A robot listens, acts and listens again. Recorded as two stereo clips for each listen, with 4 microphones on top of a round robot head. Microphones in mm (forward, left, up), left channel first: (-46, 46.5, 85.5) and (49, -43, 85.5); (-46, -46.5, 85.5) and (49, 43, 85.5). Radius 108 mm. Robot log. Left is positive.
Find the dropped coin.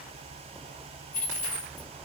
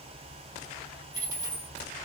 note: The dropped coin: 110° left.
cmd yaw +110
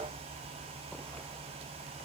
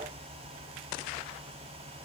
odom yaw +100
note: Nothing new. It was at 10° left.
cmd yaw +10
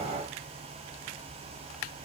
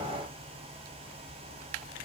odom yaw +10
end: Facing where the dropped coin came from. I can't hear it now.